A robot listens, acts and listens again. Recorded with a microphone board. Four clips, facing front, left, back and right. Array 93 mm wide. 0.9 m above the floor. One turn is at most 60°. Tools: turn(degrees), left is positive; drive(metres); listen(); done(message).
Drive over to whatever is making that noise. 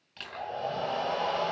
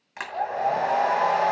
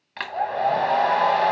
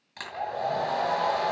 turn(degrees=60)
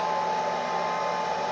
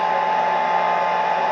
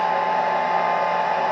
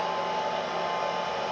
turn(degrees=60)
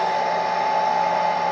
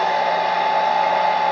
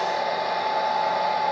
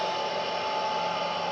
turn(degrees=60)
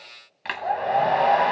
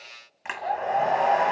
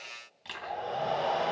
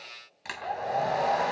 turn(degrees=30)
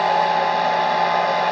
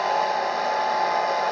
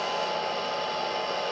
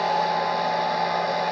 turn(degrees=10)
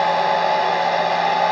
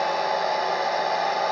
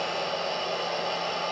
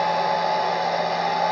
drive(metres=1.0)
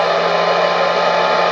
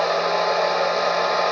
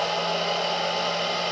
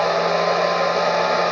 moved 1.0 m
drive(metres=1.0)
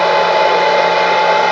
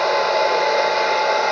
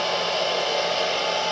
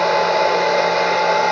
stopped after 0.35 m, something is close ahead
done("Arrived at the hair dryer, straight ahead.")